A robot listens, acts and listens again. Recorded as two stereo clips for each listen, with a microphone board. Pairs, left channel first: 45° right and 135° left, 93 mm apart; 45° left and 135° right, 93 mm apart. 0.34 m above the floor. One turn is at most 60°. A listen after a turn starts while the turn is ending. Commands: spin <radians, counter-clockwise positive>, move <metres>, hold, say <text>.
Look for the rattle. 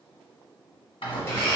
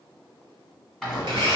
spin -0.79
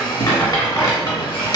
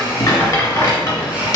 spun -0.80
say Facing the rattle.